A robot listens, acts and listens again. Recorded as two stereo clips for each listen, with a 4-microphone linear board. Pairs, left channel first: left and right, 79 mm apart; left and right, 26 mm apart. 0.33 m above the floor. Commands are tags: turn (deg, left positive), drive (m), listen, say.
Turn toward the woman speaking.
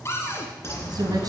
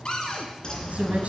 <turn deg="-60"/>
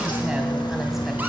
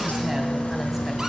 <listen/>
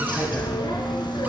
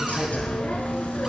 <listen/>
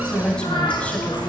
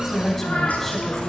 <turn deg="20"/>
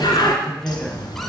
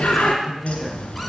<turn deg="10"/>
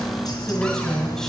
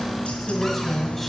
<say>Facing the woman speaking, 2 to 4 m away.</say>